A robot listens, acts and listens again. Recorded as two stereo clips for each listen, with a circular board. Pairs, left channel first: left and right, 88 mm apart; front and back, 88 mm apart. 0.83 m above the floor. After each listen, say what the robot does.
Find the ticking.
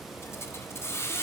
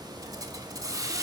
Keep listening.
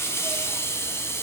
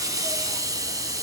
Keep listening.
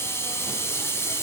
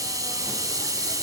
I can't make out ticking to turn to.